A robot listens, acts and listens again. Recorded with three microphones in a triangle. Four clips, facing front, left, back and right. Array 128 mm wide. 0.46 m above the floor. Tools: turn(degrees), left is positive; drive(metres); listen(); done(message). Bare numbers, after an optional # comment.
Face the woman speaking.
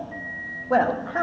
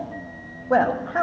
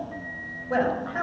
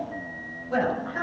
# The woman speaking: 60° left.
turn(60)
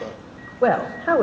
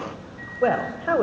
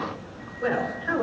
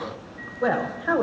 # The woman speaking is now 20° left.
turn(20)
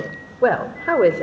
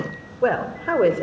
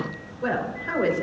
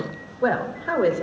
# The woman speaking is now 25° left.
turn(25)
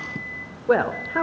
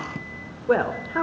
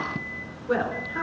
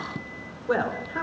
# The woman speaking is now 35° left.
turn(35)
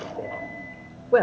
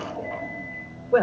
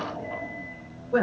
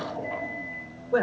# The woman speaking is now 25° left.
turn(25)
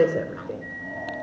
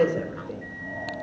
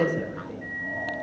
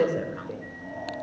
done("Found it: a woman speaking, straight ahead.")